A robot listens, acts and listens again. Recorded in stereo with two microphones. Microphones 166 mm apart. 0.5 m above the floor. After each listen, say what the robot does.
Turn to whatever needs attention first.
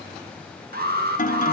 Turn 70° right.
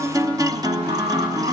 Keep listening.
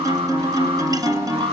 Turn 35° right.
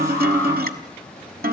Keep listening.
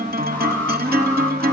Keep listening.
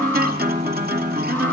Facing where the alarm came from. I can't hear it now.